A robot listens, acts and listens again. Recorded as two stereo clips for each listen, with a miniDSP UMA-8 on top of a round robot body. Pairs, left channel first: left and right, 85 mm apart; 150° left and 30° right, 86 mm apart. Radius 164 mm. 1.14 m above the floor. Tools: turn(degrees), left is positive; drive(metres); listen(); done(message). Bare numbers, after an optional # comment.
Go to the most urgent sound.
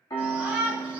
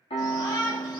# The shout: 165° right.
turn(-165)
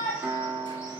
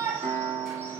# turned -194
# The shout is now 35° left.
turn(35)
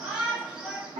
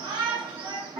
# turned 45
# The shout is now 10° right.
turn(-10)
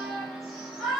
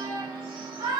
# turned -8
drive(1.0)
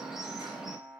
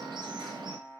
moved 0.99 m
drive(1.0)
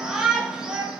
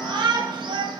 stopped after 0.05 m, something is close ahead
# The shout is now 10° right.
turn(-10)
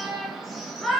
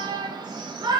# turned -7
done("Arrived at the shout, straight ahead.")